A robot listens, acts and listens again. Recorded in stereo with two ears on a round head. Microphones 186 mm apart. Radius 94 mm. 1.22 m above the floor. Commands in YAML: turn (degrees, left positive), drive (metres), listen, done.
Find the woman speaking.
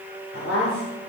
turn: 65
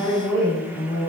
turn: 10
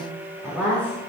turn: 10
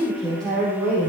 done: "Found it: a woman speaking, straight ahead, over 4 m away."